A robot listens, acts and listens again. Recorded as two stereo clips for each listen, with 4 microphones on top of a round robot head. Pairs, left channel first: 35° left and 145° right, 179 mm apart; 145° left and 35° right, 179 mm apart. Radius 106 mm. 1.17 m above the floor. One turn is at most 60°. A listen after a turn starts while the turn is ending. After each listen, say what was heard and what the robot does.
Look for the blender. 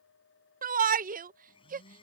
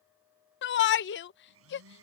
The blender: 30° right. Turn 30° right.
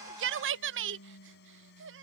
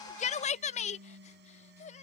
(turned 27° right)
Facing the blender.